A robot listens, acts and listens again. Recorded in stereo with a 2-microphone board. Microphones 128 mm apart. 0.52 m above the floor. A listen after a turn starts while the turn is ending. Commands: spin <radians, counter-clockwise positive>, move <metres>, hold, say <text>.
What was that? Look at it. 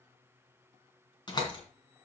spin 0.61
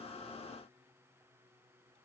hold
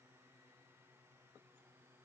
say I heard a door slam, but can't make it out now. It was about straight ahead or 110° left.